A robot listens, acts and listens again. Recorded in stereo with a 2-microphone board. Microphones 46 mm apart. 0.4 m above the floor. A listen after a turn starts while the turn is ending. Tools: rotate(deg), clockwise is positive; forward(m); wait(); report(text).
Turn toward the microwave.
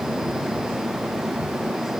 wait()
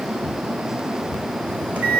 rotate(30)
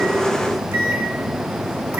rotate(110)
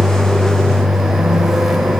report("Found it: a microwave, straight ahead, 1 to 2 m away.")